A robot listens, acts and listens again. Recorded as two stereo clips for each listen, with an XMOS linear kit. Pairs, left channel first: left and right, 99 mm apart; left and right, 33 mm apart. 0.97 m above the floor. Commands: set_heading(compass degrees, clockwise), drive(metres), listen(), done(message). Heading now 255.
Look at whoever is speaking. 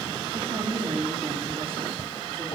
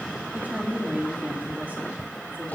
set_heading(315)
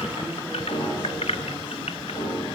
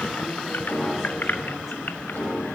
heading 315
listen()
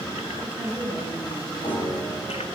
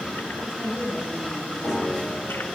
set_heading(330)
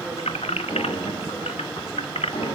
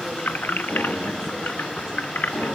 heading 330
listen()
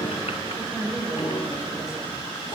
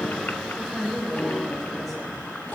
done("Facing the woman speaking.")